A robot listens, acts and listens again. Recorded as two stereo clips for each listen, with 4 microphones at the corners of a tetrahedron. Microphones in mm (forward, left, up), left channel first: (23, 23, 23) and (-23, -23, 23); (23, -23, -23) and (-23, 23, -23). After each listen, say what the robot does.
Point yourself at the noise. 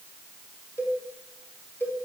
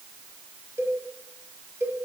Turn 95° left.
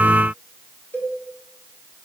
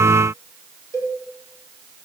Turn 15° right.
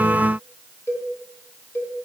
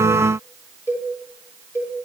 Found it: a cowbell, straight ahead.